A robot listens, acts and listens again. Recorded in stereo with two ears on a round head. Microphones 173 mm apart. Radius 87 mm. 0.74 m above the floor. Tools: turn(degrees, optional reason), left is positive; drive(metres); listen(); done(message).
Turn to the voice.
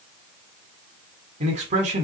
turn(degrees=-40, reason="The man speaking: about 40° right or 140° right.")
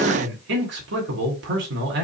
turn(degrees=-100, reason="So it is at 100° right.")
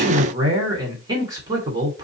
turn(degrees=-20, reason="The man speaking is now 20° right.")
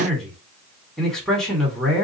done("Facing the man speaking.")